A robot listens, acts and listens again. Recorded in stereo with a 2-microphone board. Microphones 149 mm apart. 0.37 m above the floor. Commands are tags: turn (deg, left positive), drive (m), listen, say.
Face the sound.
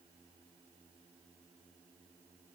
<listen/>
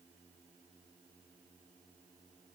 <listen/>
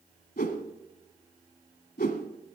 <turn deg="90"/>
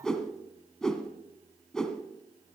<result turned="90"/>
<say>Facing the whoosh.</say>